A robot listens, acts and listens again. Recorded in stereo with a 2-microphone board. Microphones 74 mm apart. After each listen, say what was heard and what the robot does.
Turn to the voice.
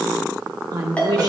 The woman speaking: about 55° right or 125° right. Turn 55° right.
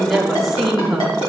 Found it: a woman speaking, straight ahead.